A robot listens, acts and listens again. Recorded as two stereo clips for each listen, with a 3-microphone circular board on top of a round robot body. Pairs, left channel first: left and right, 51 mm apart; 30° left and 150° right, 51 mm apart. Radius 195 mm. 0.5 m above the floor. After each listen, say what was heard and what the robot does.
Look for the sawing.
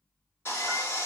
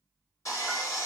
The sawing: 45° left. Turn 45° left.
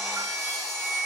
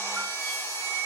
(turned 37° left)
Facing the sawing, 2 to 4 m away.